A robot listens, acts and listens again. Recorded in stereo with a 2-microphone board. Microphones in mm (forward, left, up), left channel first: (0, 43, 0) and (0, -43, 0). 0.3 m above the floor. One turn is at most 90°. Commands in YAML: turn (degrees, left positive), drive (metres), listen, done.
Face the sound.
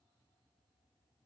listen: true
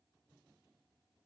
listen: true
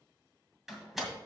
turn: 30
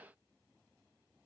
listen: true
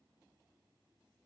done: "I heard a door slam, but can't make it out now. It was about 30° right or 150° left."